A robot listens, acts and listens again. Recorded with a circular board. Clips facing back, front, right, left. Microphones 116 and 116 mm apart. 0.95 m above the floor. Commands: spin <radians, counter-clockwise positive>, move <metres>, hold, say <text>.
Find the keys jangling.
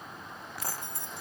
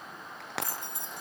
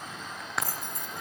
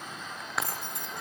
spin 1.22
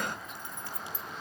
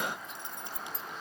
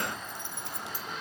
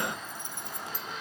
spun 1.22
spin 0.35
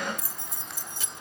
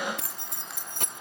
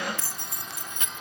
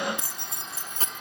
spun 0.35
spin 0.61
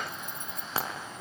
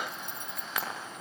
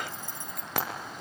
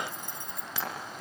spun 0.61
spin 0.44
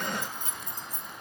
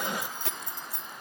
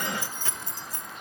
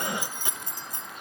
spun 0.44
spin 0.35
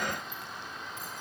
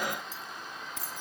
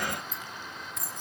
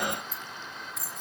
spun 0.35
say Facing the keys jangling.